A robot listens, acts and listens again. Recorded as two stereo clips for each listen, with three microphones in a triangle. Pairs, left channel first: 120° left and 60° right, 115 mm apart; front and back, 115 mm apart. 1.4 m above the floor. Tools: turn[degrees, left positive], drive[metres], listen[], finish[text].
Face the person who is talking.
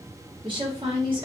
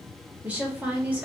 Thought: The woman speaking: 105° right.
Action: turn[-105]
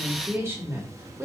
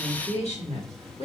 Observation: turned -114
Thought: The woman speaking is now 10° left.
Action: turn[10]
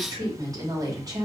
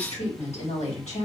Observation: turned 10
Action: finish[Facing the woman speaking, 1 to 2 m away.]